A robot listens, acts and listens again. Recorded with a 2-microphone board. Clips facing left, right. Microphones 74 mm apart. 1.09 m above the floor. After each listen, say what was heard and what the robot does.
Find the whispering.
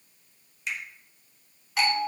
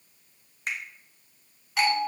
Keep listening.
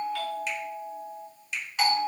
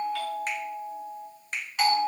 Keep listening.
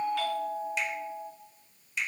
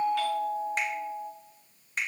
I can't make out whispering to turn to.